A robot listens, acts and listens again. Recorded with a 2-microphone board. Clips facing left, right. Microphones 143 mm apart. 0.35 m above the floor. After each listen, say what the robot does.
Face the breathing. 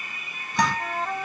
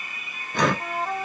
Turn 70° right.
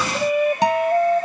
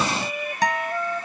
Keep listening.
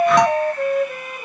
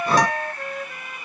Keep listening.
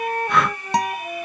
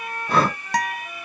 Turn 35° right.
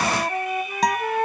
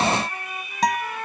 Keep listening.
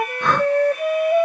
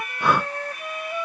Turn 10° right.
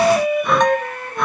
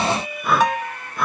Facing the breathing.